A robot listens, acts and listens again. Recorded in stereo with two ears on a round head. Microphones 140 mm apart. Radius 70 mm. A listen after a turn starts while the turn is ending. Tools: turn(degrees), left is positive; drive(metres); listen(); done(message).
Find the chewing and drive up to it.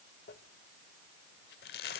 listen()
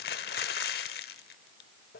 listen()
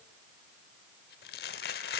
done("I can't make out chewing, only crumpling.")